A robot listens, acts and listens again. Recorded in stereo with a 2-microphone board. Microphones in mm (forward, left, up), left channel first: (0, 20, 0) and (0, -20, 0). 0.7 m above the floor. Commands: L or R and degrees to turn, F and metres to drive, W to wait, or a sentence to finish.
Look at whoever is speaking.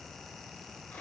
W
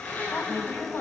L60
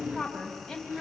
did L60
Facing the woman speaking, 2 to 4 m away.